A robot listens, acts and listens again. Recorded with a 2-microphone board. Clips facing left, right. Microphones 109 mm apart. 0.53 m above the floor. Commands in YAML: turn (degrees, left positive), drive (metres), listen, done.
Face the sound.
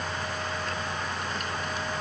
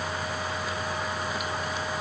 listen: true
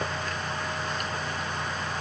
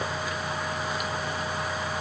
listen: true
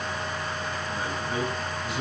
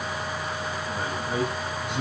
turn: -90
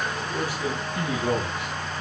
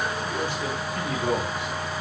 turn: 15
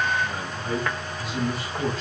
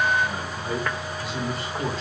done: "Facing the man speaking."